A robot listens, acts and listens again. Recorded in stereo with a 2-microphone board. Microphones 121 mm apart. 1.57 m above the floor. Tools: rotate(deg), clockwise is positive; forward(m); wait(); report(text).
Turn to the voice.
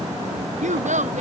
rotate(90)
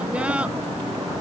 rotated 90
wait()
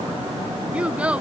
rotate(10)
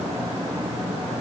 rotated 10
wait()
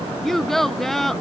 report("Found it: a child speaking, straight ahead.")